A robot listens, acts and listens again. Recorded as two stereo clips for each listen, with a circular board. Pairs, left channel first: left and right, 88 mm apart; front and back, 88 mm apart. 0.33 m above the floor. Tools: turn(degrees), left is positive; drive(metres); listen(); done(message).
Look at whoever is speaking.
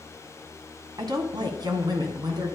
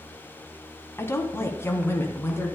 turn(degrees=-60)
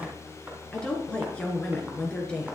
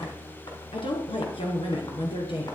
turn(degrees=10)
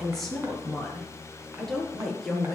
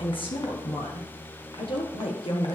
done("Found it: a woman speaking, straight ahead, over 4 m away.")